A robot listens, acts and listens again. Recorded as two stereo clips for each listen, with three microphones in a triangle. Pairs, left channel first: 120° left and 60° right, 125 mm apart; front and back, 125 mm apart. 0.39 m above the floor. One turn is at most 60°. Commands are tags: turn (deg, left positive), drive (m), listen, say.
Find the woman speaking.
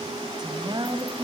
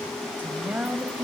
<turn deg="-60"/>
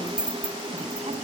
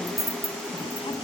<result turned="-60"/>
<turn deg="-45"/>
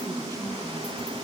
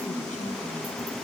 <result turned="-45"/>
<listen/>
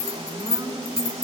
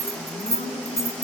<say>I heard a woman speaking from this way, but can't make it out now.</say>